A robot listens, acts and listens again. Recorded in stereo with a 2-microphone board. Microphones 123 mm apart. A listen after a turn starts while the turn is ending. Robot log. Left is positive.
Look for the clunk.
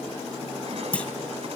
cmd yaw +30
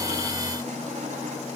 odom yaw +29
cmd idle
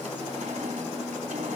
end: I heard a clunk, but can't make it out now. It was about 20° right or 140° left.